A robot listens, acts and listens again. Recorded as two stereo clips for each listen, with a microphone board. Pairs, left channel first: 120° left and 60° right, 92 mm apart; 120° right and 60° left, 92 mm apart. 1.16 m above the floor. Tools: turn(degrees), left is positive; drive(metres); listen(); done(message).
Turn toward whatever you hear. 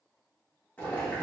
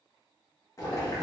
turn(degrees=-170)
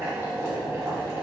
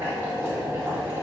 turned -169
done("Found it: boiling, straight ahead.")